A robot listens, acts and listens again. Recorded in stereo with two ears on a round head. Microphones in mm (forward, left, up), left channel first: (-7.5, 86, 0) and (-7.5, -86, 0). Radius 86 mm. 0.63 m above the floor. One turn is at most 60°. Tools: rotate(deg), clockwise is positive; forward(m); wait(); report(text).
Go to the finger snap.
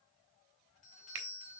rotate(60)
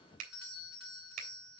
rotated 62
rotate(45)
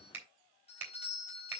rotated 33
rotate(10)
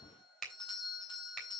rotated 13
forward(1.0)
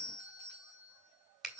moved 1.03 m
forward(1.0)
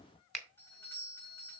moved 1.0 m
forward(1.0)
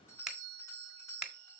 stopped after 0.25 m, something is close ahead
report("I am next to the finger snap.")